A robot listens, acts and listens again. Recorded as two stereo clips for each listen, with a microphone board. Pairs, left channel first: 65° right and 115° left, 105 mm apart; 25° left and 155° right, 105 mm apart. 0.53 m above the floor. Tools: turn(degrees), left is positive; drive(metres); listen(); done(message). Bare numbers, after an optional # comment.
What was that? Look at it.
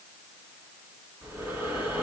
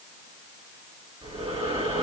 # The breathing: 175° right.
turn(-175)
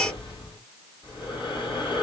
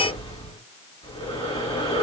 # The breathing is now 25° right.
turn(-25)
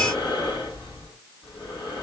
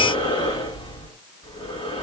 # The breathing is now 20° right.
turn(-20)
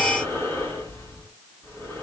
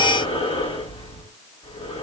done("Found it: breathing, straight ahead.")